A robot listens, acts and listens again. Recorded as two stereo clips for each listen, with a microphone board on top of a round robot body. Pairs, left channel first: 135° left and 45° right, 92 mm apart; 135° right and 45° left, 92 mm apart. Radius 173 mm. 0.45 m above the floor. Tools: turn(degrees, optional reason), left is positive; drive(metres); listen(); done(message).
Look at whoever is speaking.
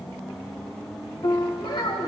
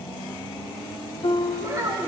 turn(degrees=100, reason="The child speaking: 100° left.")
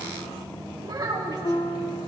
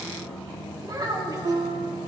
done("Found it: a child speaking, straight ahead.")